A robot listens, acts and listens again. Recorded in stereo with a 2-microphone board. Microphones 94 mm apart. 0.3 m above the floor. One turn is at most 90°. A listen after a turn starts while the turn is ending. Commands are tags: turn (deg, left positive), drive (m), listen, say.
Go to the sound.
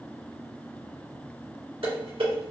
<turn deg="-70"/>
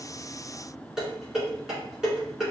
<turn deg="-10"/>
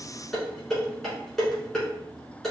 <drive m="1.0"/>
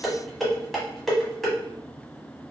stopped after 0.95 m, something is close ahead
<say>I am next to the dishes clattering.</say>